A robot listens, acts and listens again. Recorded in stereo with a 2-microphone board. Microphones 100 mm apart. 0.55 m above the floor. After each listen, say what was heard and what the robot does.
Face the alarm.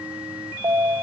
The alarm: about 35° right or 145° right. Turn 35° right.
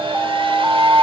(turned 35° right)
Facing the alarm, under 1 m away.